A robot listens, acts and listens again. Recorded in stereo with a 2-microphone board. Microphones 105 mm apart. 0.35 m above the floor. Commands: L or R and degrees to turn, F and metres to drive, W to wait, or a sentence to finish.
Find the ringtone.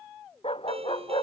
R65
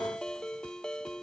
Facing the ringtone.